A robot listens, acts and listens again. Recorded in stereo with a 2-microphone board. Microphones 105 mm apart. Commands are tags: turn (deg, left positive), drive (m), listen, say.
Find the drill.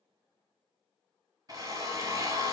<turn deg="-40"/>
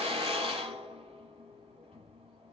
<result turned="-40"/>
<turn deg="-100"/>
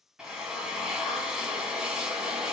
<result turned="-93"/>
<say>Found it: a drill, straight ahead.</say>